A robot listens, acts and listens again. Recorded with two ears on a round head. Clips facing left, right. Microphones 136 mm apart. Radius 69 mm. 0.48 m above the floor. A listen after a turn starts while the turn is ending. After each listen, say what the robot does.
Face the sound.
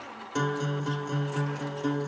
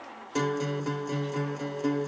Turn 30° right.
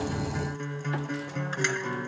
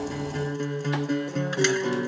Turn 140° right.
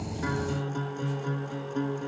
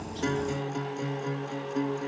Turn 10° right.
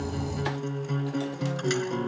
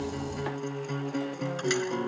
Facing the guitar.